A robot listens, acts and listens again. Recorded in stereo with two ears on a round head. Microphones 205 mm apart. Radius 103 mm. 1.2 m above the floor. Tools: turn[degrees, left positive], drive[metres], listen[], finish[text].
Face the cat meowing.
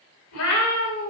Action: turn[90]
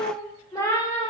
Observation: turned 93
Thought: So it is at 20° left.
Action: turn[20]
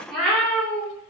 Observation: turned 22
Action: finish[Facing the cat meowing.]